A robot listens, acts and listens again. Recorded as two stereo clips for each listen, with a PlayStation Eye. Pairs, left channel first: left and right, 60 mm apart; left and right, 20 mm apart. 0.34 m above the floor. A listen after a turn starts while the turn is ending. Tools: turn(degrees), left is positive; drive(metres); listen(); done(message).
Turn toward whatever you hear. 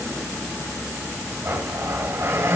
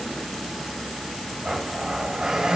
turn(degrees=-40)
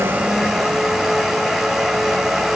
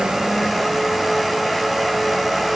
done("Facing the blender, 1 to 2 m away.")